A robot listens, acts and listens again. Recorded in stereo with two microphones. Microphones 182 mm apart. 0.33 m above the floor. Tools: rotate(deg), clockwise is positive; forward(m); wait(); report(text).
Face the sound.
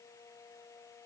wait()
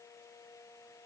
wait()
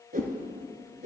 rotate(50)
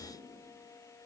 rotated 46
report("Facing the whoosh.")